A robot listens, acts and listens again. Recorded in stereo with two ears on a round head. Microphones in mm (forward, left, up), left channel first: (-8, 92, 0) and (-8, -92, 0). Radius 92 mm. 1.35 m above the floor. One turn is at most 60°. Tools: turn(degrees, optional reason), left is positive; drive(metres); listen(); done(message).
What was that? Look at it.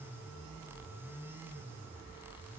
listen()
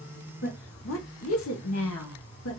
turn(degrees=60, reason="The woman speaking: about 70° left or 110° left.")
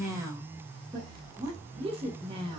turn(degrees=-25, reason="So it is at 25° right.")
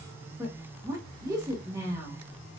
turn(degrees=-15, reason="The woman speaking is now 15° right.")
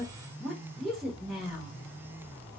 done("Facing the woman speaking.")